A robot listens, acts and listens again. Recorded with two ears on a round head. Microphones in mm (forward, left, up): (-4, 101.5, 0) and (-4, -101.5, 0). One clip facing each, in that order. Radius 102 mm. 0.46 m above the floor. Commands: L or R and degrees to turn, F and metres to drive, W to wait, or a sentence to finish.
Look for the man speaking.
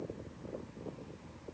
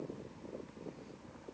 W
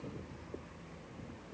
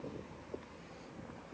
W
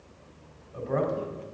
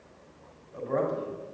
L30
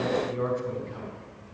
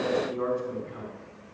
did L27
L145
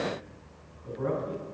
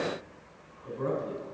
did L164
R20
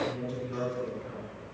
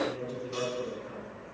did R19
Found it: a man speaking, straight ahead.